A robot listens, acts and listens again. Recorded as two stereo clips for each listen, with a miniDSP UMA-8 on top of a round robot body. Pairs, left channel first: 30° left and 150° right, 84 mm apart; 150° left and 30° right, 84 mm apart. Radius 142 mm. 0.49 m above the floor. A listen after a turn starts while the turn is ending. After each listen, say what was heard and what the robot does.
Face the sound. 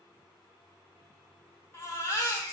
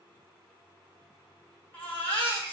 The baby crying: 85° left. Turn 85° left.
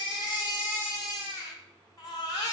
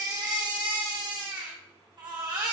The baby crying is now 10° right. Turn 10° right.
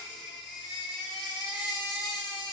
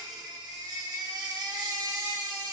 Facing the baby crying.